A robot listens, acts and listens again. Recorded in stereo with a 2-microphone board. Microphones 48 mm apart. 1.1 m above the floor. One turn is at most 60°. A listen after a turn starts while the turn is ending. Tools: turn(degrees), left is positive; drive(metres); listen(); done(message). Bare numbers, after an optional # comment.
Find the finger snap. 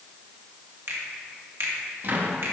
# The finger snap: about 70° right or 110° right.
turn(-60)
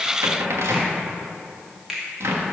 # So it is at 10° right.
turn(-10)
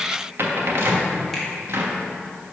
listen()
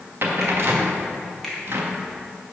done("Found it: a finger snap, straight ahead.")